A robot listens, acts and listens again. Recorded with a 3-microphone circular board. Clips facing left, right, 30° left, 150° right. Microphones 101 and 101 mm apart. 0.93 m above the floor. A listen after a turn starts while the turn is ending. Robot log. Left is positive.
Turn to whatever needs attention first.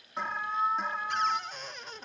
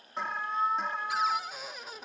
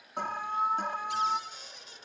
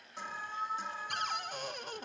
end: Found it: an alarm, straight ahead, 2 to 4 m away.